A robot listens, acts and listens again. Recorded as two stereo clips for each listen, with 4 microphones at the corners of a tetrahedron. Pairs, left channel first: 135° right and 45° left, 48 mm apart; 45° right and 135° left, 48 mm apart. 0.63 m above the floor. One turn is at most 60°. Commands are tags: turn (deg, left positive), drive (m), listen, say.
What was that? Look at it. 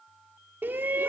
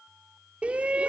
<turn deg="60"/>
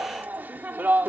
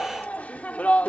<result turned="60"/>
<say>Found it: a shout, straight ahead.</say>